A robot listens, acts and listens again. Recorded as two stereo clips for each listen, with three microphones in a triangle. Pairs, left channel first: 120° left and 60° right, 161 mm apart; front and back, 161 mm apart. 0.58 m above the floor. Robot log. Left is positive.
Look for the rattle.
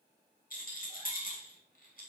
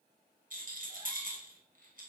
note: The rattle: 150° left.
cmd yaw +150
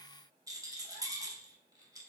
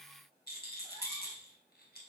note: The rattle is now 10° left.
cmd yaw +10
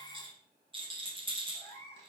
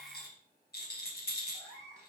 end: Found it: a rattle, straight ahead, 2 to 4 m away.